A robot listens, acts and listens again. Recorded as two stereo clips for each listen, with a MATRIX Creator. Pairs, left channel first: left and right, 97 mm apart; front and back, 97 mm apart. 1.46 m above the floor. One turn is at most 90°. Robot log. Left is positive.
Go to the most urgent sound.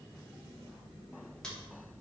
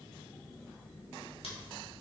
cmd idle
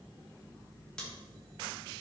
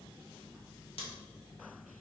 cmd idle
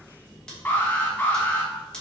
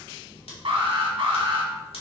note: The alarm: 160° left.
cmd yaw +90
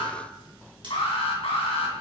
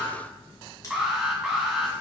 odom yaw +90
note: The alarm is now 95° left.
cmd yaw +90
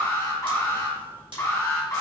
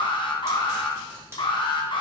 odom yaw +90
note: The alarm is now 30° left.
cmd yaw +30
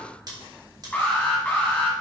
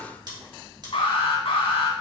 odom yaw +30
note: The alarm is now 15° left.
cmd yaw +15
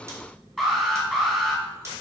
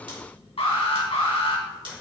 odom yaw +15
cmd fwd 1.0
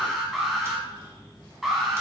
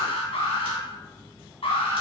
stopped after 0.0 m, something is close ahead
end: Something is in my way. I am facing the alarm but have not reached it.